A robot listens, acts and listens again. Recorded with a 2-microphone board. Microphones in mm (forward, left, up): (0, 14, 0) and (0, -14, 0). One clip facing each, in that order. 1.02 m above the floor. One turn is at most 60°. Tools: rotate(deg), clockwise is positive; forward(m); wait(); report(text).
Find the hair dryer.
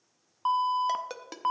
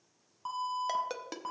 wait()
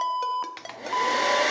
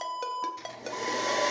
rotate(-60)
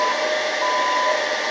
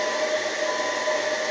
rotate(-55)
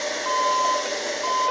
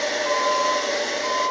rotate(15)
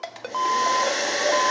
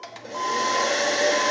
report("Facing the hair dryer.")